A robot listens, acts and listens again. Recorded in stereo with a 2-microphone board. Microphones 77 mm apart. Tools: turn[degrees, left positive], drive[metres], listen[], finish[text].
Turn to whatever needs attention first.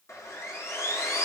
Action: listen[]
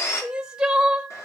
Action: turn[-30]
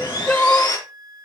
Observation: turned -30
Thought: So it is at 25° left.
Action: turn[25]
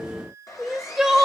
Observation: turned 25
Action: finish[Found it: crying, straight ahead.]